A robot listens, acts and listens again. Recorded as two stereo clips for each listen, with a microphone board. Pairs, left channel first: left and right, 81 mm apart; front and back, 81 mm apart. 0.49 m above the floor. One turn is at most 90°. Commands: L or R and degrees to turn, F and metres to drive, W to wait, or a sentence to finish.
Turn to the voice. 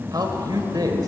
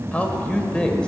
R75
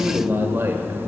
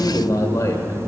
R35
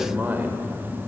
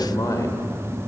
R30
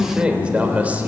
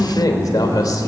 R25
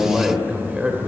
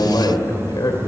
R15
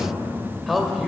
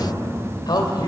Found it: a man speaking, straight ahead.